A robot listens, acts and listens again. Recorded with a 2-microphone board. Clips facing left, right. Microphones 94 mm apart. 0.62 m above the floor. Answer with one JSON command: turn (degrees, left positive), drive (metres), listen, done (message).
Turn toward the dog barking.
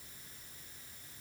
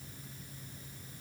{"listen": true}
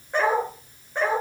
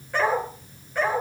{"turn": 25}
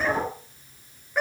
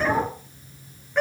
{"done": "Facing the dog barking, over 4 m away."}